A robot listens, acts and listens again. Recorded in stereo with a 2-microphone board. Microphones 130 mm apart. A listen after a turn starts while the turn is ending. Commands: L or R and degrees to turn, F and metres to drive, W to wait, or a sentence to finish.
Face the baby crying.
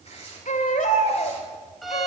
L90
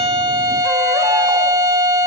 W
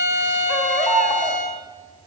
Found it: a baby crying, straight ahead.